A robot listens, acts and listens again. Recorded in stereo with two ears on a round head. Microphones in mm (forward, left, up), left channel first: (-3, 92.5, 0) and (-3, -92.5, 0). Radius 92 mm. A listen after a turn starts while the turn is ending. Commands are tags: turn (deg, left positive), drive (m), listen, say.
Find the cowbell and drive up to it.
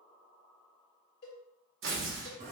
<turn deg="50"/>
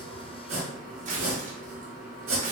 <listen/>
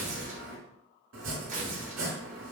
<listen/>
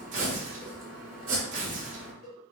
<turn deg="75"/>
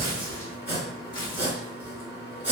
<listen/>
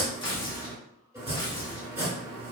<listen/>
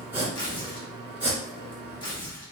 <say>Facing where the cowbell came from. I can't hear it now. I did not reach it.</say>